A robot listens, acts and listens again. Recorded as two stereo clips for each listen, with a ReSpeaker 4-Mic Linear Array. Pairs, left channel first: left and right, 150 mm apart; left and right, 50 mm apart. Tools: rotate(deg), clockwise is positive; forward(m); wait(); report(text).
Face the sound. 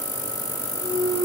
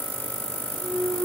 rotate(45)
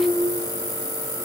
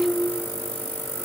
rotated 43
wait()
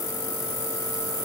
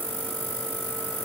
report("I heard a clunk, but can't make it out now. It was about 5° right or 90° right.")